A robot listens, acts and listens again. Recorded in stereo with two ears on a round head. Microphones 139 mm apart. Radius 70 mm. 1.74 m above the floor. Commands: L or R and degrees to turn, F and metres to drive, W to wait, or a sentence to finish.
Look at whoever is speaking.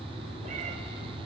W
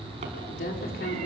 L70
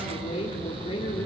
L35
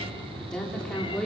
Facing the woman speaking, over 4 m away.